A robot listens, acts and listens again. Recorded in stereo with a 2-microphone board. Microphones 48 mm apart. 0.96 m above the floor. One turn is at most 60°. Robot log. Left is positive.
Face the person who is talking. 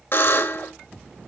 cmd idle
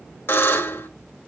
cmd idle
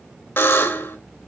end: I can't make out anyone speaking to turn to.